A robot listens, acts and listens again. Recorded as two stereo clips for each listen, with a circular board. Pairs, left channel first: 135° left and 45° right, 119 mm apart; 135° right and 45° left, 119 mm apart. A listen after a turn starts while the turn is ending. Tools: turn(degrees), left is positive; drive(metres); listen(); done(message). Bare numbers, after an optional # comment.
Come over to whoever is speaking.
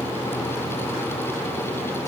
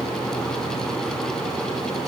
listen()
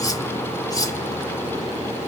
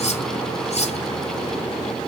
listen()
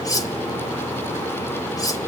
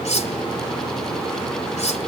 done("I can't make out anyone speaking to turn to.")